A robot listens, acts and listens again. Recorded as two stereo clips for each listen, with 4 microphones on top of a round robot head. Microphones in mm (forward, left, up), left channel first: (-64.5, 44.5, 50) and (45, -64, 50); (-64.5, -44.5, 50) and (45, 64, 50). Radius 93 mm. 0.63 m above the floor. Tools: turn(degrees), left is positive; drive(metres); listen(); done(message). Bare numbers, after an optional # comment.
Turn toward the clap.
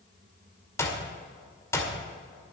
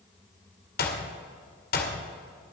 # The clap: 150° right.
turn(-150)
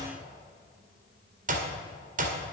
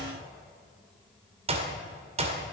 done("Facing the clap.")